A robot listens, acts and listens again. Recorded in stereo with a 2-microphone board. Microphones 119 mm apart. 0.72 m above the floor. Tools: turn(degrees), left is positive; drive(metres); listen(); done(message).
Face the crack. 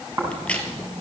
turn(degrees=30)
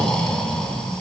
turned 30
listen()
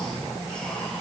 done("I heard a crack, but can't make it out now. It was about 20° right or 140° left.")